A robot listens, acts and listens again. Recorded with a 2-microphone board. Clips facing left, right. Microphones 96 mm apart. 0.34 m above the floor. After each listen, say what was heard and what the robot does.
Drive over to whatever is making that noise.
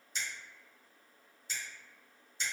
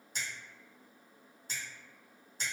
The finger snap: about 45° right or 135° right. Turn 45° right.
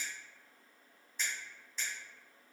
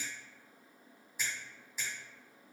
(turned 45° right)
So it is at 10° right. Turn 10° right.
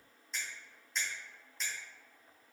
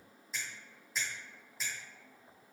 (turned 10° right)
Drive 1.0 m forward.
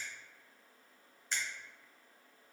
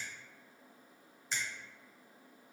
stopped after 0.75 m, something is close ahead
The finger snap is now 10° right. Turn 10° right.
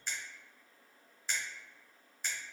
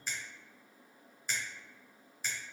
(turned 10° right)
I am next to the finger snap.